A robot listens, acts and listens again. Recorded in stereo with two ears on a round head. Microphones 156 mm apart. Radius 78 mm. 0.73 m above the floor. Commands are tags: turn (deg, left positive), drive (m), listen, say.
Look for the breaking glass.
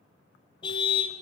<listen/>
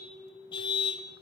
<listen/>
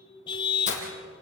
<turn deg="45"/>
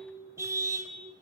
<listen/>
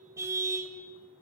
<say>I heard breaking glass, but can't make it out now. It was about straight ahead or 90° left.</say>